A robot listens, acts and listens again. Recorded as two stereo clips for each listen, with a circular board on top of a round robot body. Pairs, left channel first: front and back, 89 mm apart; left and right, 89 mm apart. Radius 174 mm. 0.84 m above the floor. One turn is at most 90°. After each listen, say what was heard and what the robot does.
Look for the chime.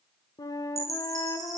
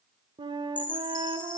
The chime: 125° left. Turn 90° left.
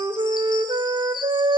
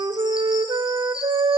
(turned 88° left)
The chime is now 40° left. Turn 40° left.
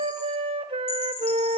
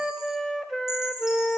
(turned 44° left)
Keep listening.
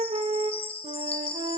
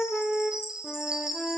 Facing the chime.